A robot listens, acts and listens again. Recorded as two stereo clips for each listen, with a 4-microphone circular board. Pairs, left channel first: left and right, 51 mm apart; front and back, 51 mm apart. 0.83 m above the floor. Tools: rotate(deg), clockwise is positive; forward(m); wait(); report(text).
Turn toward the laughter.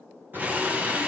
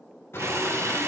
rotate(40)
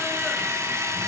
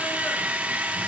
wait()
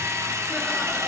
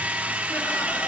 wait()
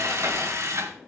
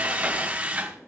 report("Facing where the laughter came from. I can't hear it now.")